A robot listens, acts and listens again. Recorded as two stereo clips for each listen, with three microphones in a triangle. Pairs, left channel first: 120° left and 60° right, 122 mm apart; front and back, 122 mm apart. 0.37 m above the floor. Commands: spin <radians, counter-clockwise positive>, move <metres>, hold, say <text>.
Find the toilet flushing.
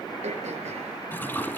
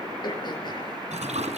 spin -2.88
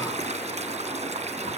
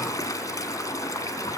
spin -1.05
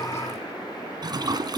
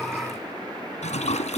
say Found it: a toilet flushing, straight ahead.